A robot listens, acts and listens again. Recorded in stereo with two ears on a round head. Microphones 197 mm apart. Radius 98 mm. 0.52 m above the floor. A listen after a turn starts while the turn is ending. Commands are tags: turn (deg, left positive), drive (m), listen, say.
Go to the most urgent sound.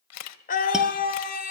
<turn deg="40"/>
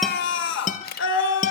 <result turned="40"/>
<turn deg="95"/>
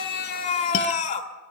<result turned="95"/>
<turn deg="40"/>
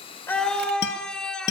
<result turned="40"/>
<drive m="1.0"/>
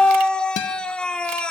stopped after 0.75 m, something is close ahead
<say>Arrived at the scream, straight ahead.</say>